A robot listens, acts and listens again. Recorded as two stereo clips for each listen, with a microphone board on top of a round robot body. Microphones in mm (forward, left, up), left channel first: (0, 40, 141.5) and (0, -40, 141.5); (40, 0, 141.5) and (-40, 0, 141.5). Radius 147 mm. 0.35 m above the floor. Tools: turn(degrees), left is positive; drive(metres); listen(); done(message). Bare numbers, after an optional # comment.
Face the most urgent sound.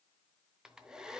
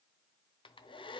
listen()
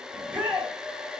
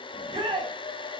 # The shout: 165° right.
turn(-165)
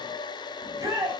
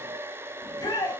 # The shout is now 40° right.
turn(-40)
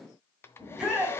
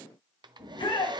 done("Found it: a shout, straight ahead, 2 to 4 m away.")